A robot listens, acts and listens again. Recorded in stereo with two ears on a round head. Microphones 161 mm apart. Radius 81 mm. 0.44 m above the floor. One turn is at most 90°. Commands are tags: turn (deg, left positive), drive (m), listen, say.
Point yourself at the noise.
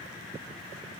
<listen/>
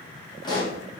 <turn deg="25"/>
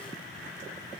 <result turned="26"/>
<listen/>
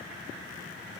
<say>I heard a pop, but can't make it out now. It was about straight ahead or 130° left.</say>